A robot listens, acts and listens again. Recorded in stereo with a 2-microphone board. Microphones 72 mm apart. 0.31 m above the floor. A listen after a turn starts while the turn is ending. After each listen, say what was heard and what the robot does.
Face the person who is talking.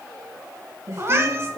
The woman speaking: about 35° right or 145° right. Turn 35° right.
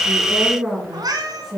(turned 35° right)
Facing the woman speaking.